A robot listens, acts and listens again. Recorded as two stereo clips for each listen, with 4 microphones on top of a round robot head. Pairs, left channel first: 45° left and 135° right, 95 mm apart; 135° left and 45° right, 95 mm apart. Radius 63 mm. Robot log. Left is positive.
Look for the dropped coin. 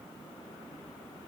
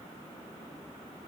cmd idle
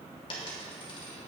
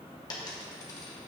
note: The dropped coin: 85° left.
cmd yaw +85
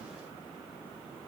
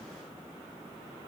end: Facing where the dropped coin came from. I can't hear it now.